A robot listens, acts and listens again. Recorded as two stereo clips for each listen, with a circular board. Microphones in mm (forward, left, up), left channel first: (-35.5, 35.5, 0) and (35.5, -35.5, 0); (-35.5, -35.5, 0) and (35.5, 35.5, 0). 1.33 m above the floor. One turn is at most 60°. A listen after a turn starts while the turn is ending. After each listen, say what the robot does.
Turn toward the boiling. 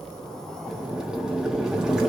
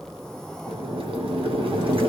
Turn 35° left.
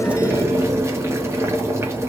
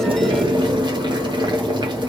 Turn 15° left.
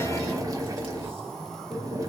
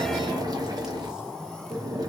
Facing the boiling.